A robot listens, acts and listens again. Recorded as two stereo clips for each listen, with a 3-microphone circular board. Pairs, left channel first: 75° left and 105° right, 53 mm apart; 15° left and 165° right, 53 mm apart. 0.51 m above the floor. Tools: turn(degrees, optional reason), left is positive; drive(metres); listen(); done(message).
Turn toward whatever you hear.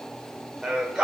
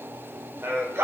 turn(degrees=180, reason="The singing: straight behind.")
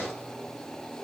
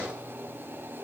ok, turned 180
listen()
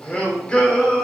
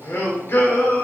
turn(degrees=10, reason="The singing is now 10° left.")
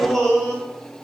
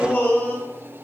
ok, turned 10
turn(degrees=-15, reason="The singing is now 15° right.")
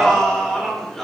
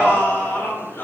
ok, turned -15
turn(degrees=-10, reason="The singing is now 10° right.")
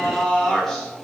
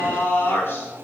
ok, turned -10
done("Found it: singing, straight ahead, 2 to 4 m away.")